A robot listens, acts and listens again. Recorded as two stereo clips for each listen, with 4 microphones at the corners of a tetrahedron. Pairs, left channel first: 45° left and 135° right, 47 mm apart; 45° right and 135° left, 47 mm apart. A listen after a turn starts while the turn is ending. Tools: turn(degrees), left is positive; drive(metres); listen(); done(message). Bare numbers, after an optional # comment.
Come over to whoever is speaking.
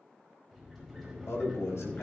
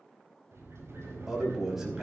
# The man speaking: 55° left.
turn(55)
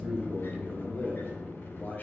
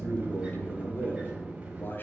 drive(1.0)
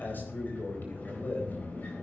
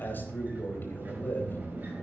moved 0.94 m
drive(1.0)
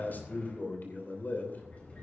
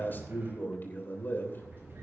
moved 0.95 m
drive(1.0)
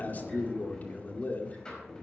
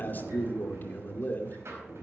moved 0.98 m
drive(1.0)
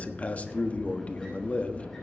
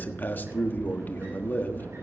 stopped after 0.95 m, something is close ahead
done("I am next to the man speaking.")